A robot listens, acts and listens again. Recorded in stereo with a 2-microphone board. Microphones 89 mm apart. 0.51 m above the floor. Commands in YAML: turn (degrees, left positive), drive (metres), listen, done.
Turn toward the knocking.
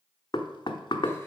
turn: 50
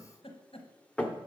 turn: 15
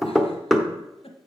done: "Found it: knocking, straight ahead."